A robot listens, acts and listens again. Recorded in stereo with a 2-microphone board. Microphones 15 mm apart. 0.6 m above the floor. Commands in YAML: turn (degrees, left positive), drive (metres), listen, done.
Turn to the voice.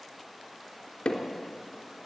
listen: true
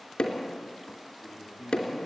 turn: -45
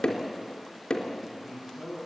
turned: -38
turn: -15
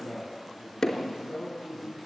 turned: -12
done: "Found it: a man speaking, straight ahead."